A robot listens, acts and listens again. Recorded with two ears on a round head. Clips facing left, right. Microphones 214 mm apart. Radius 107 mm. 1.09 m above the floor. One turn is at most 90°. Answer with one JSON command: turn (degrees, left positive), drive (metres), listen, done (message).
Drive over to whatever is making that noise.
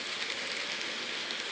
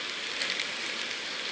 {"listen": true}
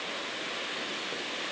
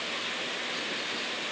{"listen": true}
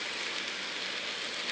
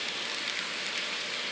{"done": "I can't make out anything to turn to."}